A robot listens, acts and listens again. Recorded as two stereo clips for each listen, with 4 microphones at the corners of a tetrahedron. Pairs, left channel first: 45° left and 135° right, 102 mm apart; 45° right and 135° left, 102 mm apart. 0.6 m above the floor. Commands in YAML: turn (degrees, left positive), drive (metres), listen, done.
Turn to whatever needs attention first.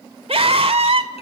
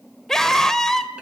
turn: -130
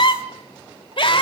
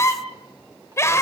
turn: 15
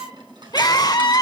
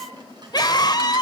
done: "Found it: a scream, straight ahead, 1 to 2 m away."